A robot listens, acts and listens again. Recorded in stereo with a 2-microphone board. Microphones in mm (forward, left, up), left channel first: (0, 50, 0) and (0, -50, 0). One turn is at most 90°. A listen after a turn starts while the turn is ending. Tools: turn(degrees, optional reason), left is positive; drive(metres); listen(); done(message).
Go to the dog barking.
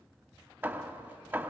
listen()
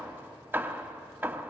listen()
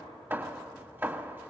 done("I can't make out a dog barking to turn to.")